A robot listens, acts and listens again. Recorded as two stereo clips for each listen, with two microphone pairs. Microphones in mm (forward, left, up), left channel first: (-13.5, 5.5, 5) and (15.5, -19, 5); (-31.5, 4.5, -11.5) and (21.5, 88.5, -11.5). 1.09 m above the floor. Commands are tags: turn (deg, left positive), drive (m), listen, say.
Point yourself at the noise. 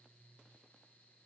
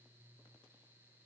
<listen/>
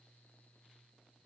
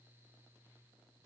<listen/>
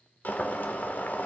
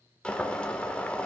<turn deg="160"/>
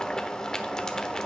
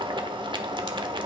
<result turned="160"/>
<turn deg="70"/>
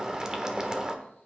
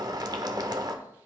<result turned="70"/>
<turn deg="20"/>
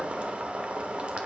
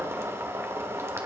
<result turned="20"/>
<say>Found it: boiling, straight ahead, 1 to 2 m away.</say>